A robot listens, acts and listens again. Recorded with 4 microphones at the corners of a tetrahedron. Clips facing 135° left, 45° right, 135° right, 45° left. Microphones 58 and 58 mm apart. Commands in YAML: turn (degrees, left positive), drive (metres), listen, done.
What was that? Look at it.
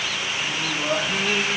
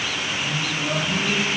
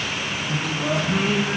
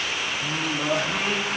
turn: 70
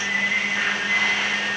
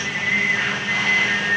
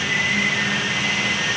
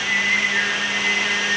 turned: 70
done: "Found it: singing, straight ahead."